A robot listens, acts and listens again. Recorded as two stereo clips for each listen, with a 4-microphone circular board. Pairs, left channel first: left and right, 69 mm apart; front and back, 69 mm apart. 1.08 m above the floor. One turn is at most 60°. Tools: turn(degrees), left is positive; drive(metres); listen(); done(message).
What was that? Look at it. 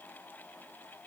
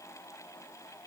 listen()
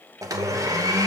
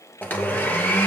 turn(degrees=-60)
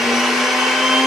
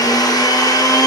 done("Found it: a blender, straight ahead.")